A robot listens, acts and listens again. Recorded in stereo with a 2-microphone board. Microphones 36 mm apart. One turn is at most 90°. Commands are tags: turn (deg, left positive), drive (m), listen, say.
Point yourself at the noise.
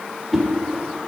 <turn deg="-30"/>
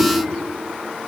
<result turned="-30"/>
<turn deg="-90"/>
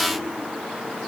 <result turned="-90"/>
<turn deg="-55"/>
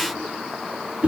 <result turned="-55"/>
<turn deg="-45"/>
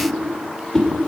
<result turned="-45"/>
<turn deg="20"/>
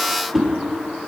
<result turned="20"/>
<say>Facing the whoosh.</say>